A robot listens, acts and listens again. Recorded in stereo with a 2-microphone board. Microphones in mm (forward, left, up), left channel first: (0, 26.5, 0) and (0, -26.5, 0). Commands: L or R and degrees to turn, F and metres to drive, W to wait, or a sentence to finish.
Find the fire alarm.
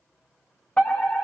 L20
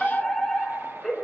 Found it: a fire alarm, straight ahead, over 4 m away.